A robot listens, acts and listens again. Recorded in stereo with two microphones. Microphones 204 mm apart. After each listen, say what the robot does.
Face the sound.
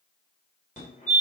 Turn 40° left.
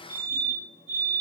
Turn 95° left.
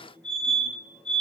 Found it: a fire alarm, straight ahead, 2 to 4 m away.